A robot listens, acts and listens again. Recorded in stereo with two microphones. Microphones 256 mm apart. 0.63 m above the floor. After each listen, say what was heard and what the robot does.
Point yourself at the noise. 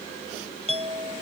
The clink: about 25° right or 155° right. Turn 25° right.
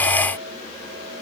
Keep listening.
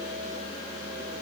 Keep listening.
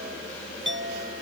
So it is at 130° right. Turn 130° right.
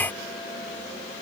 Keep listening.
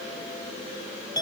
The clink is now 15° left. Turn 15° left.
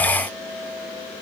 Found it: a clink, straight ahead.